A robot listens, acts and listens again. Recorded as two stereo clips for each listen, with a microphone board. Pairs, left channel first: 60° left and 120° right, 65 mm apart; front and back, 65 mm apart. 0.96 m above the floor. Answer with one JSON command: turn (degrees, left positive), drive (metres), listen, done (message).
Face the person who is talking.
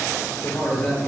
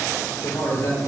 {"turn": -15}
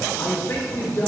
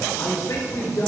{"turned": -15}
{"done": "Facing the man speaking."}